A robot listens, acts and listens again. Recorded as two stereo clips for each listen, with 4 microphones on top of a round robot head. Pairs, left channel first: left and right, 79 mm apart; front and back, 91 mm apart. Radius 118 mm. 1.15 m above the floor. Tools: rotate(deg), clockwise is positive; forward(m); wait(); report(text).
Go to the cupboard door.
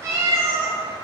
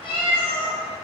wait()
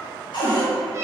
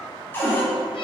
rotate(-70)
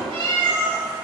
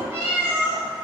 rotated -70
wait()
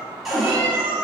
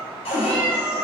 forward(1.0)
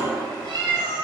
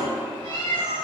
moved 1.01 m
wait()
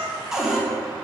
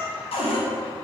forward(1.0)
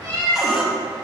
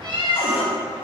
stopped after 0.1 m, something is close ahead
wait()
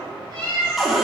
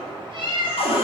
report("I am next to the cupboard door.")